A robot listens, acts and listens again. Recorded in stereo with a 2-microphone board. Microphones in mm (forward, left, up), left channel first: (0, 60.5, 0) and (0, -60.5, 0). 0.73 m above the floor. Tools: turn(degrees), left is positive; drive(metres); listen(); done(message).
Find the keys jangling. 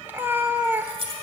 turn(degrees=-50)
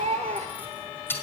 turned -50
turn(degrees=20)
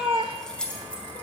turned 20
turn(degrees=10)
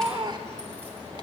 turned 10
listen()
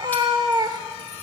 listen()
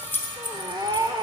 turn(degrees=15)
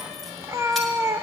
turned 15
listen()
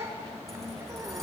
listen()
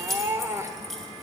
done("Found it: keys jangling, straight ahead.")